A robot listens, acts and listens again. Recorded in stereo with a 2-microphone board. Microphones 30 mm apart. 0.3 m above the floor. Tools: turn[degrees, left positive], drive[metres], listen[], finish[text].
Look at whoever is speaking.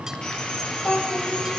Thought: The child speaking: about 65° left or 115° left.
Action: turn[65]
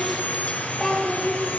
Action: finish[Facing the child speaking.]